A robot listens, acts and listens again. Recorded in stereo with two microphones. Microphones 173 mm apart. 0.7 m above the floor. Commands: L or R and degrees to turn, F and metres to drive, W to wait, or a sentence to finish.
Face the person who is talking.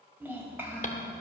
R30
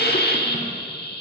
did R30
W
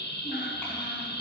W
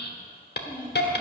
L10
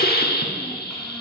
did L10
W
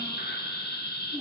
Found it: a child speaking, straight ahead.